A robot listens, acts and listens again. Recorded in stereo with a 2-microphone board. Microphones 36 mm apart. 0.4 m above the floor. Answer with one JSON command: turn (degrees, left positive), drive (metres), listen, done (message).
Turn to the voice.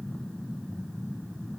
{"listen": true}
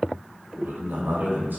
{"turn": -70}
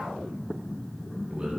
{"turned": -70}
{"turn": -30}
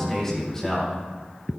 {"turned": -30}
{"turn": 15}
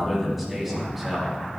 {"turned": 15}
{"done": "Facing the man speaking."}